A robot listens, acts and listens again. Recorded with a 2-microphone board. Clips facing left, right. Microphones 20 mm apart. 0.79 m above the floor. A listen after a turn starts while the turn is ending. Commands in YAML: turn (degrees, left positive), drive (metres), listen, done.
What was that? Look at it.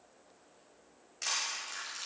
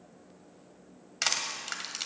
turn: -65
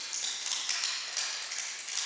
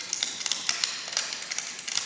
turn: -45
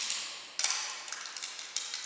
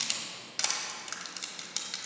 turn: -10
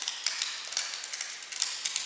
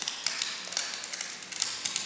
done: "Facing the crushing, 1 to 2 m away."